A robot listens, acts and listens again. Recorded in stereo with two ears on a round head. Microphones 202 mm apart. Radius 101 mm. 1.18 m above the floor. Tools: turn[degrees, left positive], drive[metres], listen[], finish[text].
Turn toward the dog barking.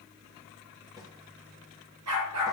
Action: turn[-90]
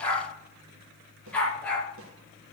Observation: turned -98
Action: finish[Found it: a dog barking, straight ahead.]